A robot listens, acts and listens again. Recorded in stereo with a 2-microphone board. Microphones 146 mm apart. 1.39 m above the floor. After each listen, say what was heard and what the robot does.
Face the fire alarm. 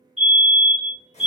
The fire alarm: about 45° right or 135° right. Turn 45° right.
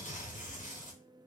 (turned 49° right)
Keep listening.
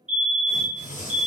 So it is at 10° right. Turn 10° right.
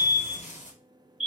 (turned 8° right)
Facing the fire alarm, 1 to 2 m away.